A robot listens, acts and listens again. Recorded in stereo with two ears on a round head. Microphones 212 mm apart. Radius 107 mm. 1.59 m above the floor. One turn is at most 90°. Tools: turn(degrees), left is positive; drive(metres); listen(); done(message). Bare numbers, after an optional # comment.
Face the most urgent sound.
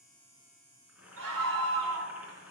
# The scream: about 70° right or 110° right.
turn(-70)
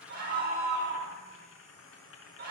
# So it is at 40° right.
turn(-40)
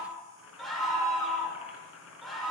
done("Found it: a scream, straight ahead, over 4 m away.")